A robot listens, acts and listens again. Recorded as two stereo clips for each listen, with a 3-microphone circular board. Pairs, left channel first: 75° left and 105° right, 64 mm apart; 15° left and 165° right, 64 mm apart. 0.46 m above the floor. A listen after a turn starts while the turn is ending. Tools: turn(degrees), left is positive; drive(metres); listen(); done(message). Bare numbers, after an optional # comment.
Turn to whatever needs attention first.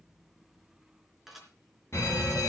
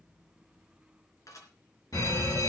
# The fire alarm: 30° left.
turn(30)
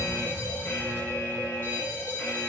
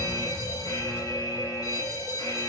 # The fire alarm is now 10° left.
turn(10)
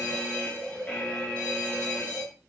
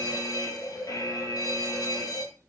done("Facing the fire alarm.")